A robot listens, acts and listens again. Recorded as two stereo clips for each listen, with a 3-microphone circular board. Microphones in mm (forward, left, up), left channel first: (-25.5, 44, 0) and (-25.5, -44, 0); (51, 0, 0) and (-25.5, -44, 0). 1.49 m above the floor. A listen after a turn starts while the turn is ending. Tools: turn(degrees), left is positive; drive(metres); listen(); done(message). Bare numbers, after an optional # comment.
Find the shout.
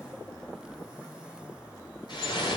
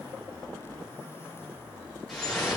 listen()
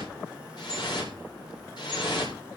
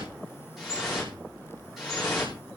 listen()
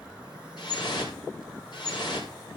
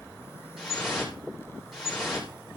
done("I can't make out a shout to turn to.")